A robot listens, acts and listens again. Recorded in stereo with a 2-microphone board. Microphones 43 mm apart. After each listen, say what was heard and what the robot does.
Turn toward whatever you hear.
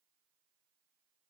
Keep listening.
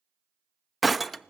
Turn 30° right.
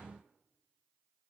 Keep listening.
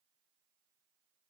I heard breaking glass, but can't make it out now. It was about 25° left or 145° right.